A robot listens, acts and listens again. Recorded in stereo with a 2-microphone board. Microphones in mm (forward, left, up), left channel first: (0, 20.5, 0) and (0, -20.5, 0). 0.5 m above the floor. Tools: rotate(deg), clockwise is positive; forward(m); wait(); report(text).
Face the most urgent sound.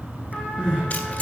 rotate(15)
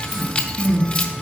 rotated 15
report("Found it: crying, straight ahead, 2 to 4 m away.")